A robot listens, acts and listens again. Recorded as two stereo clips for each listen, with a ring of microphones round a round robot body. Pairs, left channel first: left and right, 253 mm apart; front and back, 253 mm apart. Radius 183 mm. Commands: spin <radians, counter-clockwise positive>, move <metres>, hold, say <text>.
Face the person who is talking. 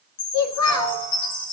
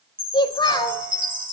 spin 1.31
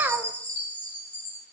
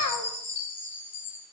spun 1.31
say Facing the child speaking, 1 to 2 m away.